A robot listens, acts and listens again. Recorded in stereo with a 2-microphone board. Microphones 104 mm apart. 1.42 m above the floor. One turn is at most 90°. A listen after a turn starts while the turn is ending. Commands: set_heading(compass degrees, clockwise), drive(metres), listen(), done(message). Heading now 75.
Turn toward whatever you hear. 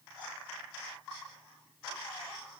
listen()
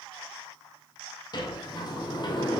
set_heading(30)
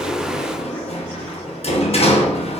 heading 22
set_heading(302)
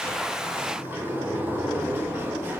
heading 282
set_heading(302)
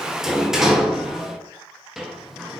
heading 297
done("Found it: a sliding door, straight ahead, under 1 m away.")